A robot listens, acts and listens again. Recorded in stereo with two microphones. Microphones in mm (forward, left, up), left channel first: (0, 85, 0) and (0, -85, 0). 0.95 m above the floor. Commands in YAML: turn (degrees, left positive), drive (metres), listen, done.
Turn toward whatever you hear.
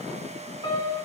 turn: 25
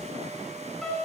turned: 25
done: "Facing the piano, 2 to 4 m away."